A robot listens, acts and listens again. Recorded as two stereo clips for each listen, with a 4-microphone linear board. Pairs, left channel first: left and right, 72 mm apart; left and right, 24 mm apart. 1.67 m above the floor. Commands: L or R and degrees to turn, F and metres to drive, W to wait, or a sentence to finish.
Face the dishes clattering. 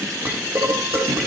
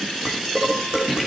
R40
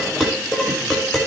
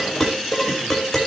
Facing the dishes clattering.